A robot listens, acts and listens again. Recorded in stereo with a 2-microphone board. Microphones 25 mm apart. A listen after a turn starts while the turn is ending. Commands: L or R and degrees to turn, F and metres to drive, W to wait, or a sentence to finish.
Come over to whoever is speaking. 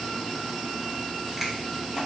W
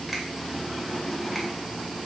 W
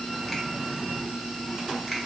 I can't make out anyone speaking, only a finger snap.